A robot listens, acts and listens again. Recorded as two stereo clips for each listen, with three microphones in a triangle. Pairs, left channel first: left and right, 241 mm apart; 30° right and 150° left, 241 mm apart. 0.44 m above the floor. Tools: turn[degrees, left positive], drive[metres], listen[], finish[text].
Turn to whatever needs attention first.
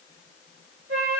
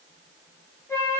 Action: listen[]
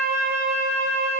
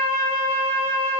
Action: listen[]
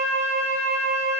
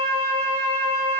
Action: finish[I can't make out anything urgent to turn to.]